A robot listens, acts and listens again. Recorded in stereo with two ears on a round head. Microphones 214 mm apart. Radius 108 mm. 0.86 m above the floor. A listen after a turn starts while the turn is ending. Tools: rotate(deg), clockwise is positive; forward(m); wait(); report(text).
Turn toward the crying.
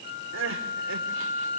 rotate(60)
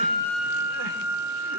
wait()
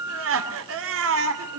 rotate(60)
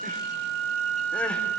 wait()
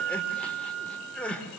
report("Found it: crying, straight ahead.")